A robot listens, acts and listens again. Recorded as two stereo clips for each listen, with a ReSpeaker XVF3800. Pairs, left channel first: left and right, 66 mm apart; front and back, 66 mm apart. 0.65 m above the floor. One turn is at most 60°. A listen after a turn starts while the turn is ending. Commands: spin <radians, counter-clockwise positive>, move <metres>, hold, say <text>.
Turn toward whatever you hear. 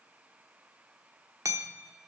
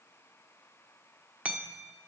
spin -1.05
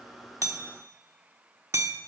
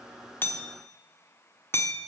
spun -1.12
spin -0.87
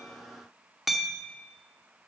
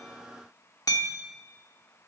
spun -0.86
say Found it: hammering, straight ahead.